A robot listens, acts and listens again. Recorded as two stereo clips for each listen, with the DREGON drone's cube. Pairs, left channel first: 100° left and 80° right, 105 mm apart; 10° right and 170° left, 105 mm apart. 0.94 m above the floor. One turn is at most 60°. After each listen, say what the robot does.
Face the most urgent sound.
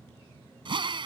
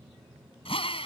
Keep listening.
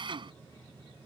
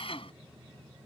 Keep listening.
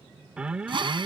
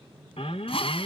Facing the alarm.